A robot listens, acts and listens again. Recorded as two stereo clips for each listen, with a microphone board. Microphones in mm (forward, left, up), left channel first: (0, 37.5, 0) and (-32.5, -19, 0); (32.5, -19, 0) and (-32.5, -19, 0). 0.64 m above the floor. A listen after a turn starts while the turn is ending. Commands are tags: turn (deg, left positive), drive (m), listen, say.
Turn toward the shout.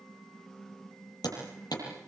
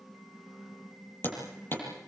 <listen/>
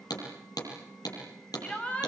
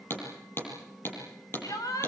<turn deg="-10"/>
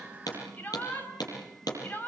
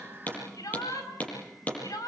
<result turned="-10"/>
<say>Facing the shout.</say>